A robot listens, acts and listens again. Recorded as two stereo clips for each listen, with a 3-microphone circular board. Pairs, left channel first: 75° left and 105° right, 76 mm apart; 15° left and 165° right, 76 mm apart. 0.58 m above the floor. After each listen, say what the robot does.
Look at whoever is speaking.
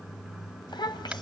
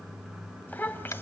Turn 80° left.
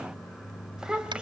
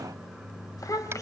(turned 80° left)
Turn 25° right.
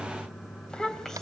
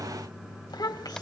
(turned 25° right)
Turn 10° right.
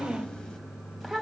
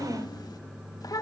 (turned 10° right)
Turn 15° right.
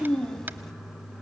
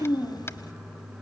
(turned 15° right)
Facing the child speaking, 2 to 4 m away.